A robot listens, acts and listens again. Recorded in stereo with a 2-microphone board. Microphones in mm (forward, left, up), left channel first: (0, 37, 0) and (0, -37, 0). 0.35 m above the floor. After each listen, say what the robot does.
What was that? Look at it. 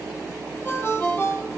Turn 25° left.
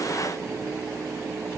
Keep listening.
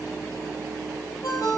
Turn 130° left.
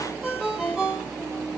Facing the ringtone.